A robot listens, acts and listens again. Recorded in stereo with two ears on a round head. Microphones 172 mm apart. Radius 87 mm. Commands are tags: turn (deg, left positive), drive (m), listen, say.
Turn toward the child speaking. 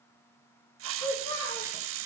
<turn deg="20"/>
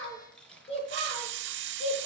<turn deg="30"/>
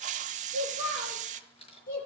<turn deg="125"/>
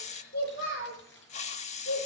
<turn deg="45"/>
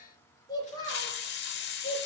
<turn deg="20"/>
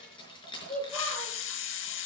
<say>Facing the child speaking, over 4 m away.</say>